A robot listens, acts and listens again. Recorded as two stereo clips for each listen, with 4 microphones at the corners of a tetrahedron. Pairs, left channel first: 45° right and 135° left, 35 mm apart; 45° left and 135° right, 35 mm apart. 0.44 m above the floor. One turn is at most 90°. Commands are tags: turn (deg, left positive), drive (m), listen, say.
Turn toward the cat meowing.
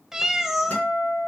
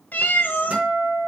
<turn deg="55"/>
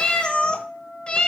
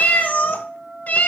<turn deg="10"/>
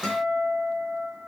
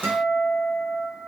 <listen/>
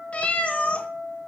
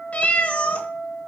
<say>Facing the cat meowing.</say>